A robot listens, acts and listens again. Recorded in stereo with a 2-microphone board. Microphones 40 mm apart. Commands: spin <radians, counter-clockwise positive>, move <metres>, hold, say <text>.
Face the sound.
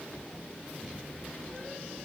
hold
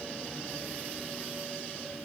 hold
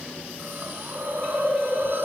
spin -1.13
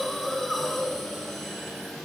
say Facing the hiss.